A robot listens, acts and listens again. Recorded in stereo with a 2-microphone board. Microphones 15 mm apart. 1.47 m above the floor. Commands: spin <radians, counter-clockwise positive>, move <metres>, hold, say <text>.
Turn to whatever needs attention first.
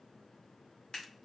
hold
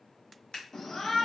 spin 0.61
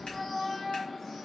say Found it: a shout, straight ahead.